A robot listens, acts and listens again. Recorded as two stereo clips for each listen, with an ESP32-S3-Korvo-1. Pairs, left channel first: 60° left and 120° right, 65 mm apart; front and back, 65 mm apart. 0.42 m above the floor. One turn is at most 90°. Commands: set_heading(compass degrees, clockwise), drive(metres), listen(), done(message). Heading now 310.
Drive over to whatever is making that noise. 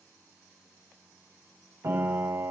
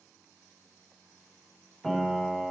set_heading(35)
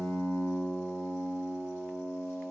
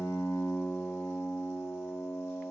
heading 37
drive(1.0)
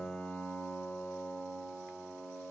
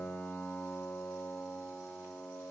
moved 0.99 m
drive(1.0)
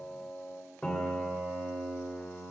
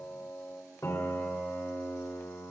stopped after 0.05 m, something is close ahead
done("Arrived at the piano, straight ahead.")